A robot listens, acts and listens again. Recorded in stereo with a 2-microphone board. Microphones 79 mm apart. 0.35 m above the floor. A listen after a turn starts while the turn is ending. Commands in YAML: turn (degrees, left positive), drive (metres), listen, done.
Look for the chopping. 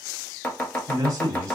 turn: 20
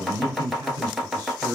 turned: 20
done: "Facing the chopping, under 1 m away."